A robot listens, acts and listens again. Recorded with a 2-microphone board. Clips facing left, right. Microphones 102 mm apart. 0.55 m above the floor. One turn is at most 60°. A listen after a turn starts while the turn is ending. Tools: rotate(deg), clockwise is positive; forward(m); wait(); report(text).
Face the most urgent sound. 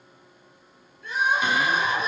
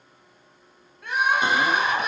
rotate(60)
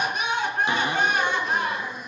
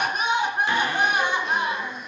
rotate(15)
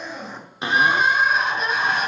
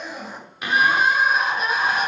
report("Found it: crying, straight ahead, 2 to 4 m away.")